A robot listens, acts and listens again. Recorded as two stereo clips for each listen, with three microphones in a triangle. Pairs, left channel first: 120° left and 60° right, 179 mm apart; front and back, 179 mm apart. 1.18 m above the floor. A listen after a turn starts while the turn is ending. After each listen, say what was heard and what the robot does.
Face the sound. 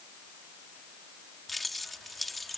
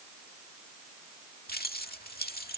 The keys jangling: 30° left. Turn 30° left.
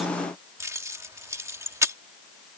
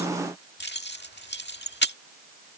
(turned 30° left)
The keys jangling is now 15° left. Turn 15° left.
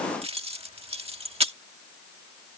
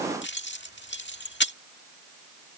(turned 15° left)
Found it: keys jangling, straight ahead.